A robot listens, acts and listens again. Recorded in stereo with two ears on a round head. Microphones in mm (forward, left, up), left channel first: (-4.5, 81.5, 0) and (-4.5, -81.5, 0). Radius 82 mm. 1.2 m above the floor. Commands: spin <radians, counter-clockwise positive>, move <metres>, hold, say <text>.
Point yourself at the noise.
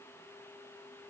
hold
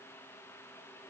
hold
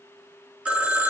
spin -0.52
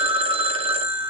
spin -2.44
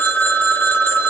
spin 0.26
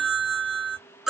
say Facing the phone ringing.